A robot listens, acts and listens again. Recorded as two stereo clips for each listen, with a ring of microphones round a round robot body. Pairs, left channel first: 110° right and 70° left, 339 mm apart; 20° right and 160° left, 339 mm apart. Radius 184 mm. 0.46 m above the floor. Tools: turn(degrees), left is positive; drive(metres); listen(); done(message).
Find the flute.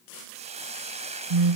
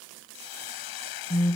listen()
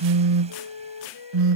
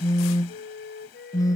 turn(degrees=-85)
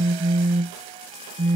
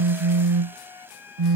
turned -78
listen()
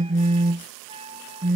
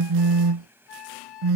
done("Found it: a flute, straight ahead.")